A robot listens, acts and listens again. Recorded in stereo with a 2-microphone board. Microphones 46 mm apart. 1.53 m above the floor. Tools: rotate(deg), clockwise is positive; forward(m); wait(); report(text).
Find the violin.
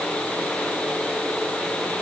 wait()
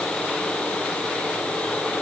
wait()
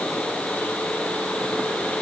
report("I can't make out a violin.")